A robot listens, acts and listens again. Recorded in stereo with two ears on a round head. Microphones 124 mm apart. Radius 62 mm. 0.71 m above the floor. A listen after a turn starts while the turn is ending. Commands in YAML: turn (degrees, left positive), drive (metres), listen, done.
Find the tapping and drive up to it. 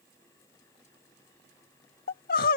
listen: true
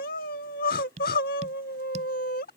turn: -50
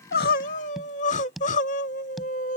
drive: 1.0
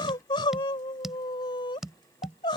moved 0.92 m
drive: 1.0
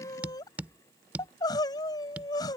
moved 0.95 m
turn: -10
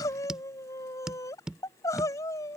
drive: 1.0
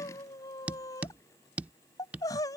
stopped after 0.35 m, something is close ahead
turn: -10
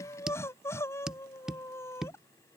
done: "Arrived at the tapping, straight ahead."